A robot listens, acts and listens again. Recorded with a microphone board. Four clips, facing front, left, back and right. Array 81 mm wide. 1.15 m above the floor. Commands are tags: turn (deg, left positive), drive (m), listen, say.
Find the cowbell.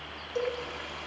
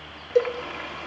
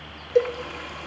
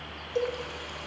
<turn deg="140"/>
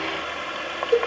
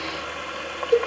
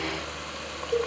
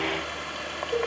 <turn deg="40"/>
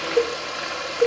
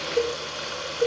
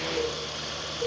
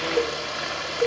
<say>Facing the cowbell, 2 to 4 m away.</say>